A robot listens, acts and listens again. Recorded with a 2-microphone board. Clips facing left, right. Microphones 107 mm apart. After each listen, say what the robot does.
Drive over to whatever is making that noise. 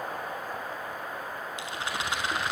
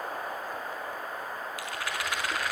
Turn 25° left.
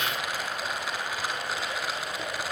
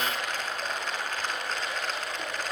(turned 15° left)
Turn 10° left.
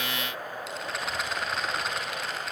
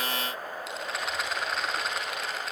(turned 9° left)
Drive 1.0 m forward.
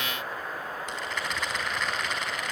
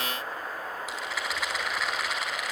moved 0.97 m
Drive 1.0 m forward.
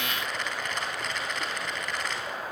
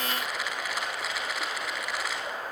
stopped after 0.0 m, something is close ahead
Blocked. The rattle is further on, straight ahead.